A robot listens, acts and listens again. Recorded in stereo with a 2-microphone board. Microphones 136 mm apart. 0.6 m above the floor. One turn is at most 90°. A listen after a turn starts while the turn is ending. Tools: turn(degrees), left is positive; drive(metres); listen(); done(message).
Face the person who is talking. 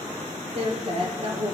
turn(degrees=-45)
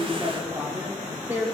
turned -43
turn(degrees=-20)
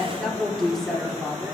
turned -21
done("Facing the woman speaking.")